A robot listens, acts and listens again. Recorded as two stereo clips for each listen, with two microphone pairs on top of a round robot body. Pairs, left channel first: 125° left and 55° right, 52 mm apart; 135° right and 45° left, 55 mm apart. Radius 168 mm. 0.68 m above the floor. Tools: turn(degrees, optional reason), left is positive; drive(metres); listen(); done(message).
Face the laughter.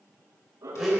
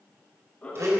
turn(degrees=-70, reason="The laughter: 70° right.")
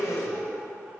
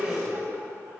listen()
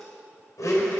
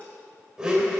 listen()
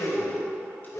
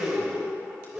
done("Facing where the laughter came from. I can't hear it now.")